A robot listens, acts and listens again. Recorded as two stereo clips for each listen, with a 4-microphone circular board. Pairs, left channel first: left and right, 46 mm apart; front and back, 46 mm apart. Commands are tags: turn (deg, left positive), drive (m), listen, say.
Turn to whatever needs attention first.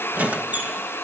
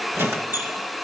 <listen/>
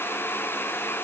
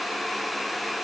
<listen/>
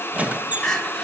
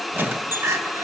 <turn deg="165"/>
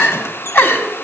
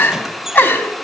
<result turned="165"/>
<turn deg="50"/>
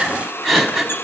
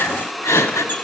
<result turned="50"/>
<say>Found it: crying, straight ahead.</say>